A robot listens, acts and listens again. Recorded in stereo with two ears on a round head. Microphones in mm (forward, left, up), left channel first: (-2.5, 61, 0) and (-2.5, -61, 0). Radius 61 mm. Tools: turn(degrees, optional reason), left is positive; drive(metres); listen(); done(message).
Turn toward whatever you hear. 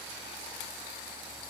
listen()
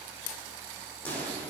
turn(degrees=30)
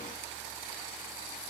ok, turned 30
listen()
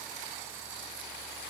done("I heard a pop, but can't make it out now. It was about 20° right or 140° left.")